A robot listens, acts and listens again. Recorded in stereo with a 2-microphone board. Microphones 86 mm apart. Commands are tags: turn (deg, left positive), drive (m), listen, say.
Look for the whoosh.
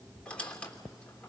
<listen/>
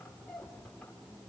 <listen/>
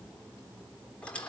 <say>I can't make out a whoosh to turn to.</say>